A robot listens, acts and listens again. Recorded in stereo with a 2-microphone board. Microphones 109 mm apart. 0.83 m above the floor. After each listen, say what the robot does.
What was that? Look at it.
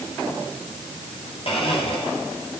Turn 55° left.
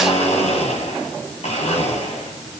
Turn 70° left.
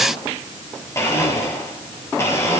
Turn 25° left.
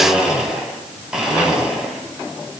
Facing the blender, over 4 m away.